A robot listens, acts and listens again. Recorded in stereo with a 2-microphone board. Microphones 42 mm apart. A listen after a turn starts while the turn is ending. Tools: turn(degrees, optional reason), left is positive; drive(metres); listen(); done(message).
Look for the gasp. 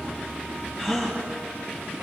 turn(degrees=-30)
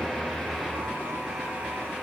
listen()
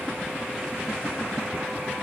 done("I heard a gasp, but can't make it out now. It was about 20° left or 140° right.")